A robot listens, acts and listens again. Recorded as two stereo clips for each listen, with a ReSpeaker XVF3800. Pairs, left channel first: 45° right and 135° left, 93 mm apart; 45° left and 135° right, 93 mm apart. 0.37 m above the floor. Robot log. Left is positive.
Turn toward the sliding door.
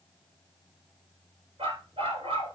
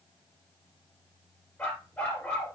cmd idle
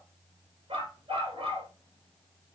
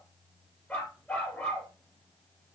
cmd idle
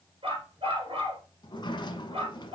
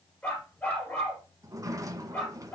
note: The sliding door: 80° right.
cmd yaw -80
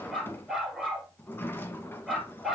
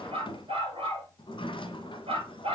note: The sliding door is now 20° left.
cmd yaw +20
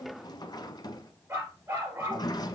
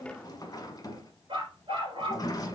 end: Found it: a sliding door, straight ahead.